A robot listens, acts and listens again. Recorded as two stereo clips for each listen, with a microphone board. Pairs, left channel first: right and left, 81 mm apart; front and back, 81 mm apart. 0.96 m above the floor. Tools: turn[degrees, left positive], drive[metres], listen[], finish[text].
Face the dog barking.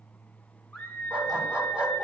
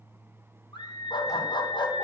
Thought: The dog barking: 10° left.
Action: turn[10]
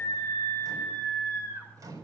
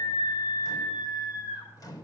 Action: listen[]
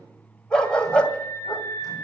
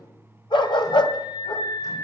Thought: The dog barking is now 15° right.
Action: turn[-15]
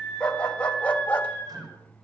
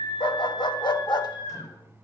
Thought: The dog barking is now 20° right.
Action: turn[-20]
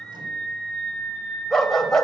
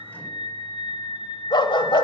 Action: finish[Found it: a dog barking, straight ahead, 1 to 2 m away.]